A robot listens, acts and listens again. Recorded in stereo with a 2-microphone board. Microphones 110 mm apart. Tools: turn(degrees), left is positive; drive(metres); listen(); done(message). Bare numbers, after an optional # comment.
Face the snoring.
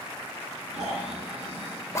turn(-90)
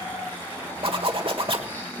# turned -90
# So it is at 15° left.
turn(15)
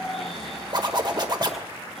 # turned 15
done("Found it: snoring, straight ahead.")